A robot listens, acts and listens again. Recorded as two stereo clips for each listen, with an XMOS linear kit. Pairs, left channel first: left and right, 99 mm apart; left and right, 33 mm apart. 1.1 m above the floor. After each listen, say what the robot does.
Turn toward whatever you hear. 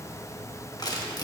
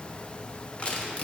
Turn 40° left.
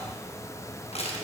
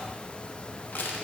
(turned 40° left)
Turn 100° left.
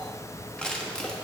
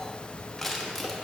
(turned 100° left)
Turn 10° left.
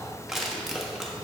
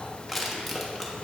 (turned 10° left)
Facing the crushing.